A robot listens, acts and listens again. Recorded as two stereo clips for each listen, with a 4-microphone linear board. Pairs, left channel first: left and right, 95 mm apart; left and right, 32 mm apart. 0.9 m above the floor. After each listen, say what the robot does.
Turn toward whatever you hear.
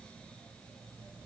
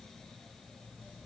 Keep listening.
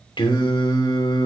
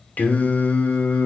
Turn 55° left.
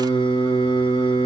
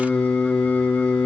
Turn 70° left.
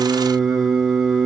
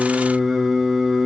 Found it: singing, straight ahead.